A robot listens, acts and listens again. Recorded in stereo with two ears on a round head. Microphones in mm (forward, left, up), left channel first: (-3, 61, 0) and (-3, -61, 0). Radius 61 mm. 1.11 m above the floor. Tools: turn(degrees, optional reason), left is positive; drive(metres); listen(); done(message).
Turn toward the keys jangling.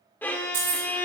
turn(degrees=-45, reason="The keys jangling: about 45° right or 135° right.")
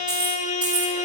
turn(degrees=-10, reason="So it is at 10° right.")
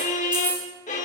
turn(degrees=-10, reason="The keys jangling is now 10° right.")
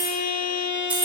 turn(degrees=-15, reason="The keys jangling is now 15° right.")
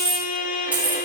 turn(degrees=-15, reason="The keys jangling is now 15° right.")
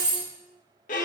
turn(degrees=-10, reason="The keys jangling is now 10° right.")
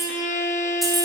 done("Facing the keys jangling.")